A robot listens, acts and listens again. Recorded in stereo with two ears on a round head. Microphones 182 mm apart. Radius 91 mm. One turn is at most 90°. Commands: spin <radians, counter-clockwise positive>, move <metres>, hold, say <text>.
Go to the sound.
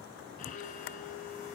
spin 0.70
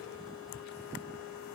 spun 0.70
spin 1.57
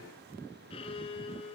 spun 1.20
spin 0.52
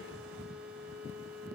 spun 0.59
move 1.0
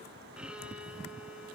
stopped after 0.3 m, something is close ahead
say Blocked. The violin is further on, straight ahead.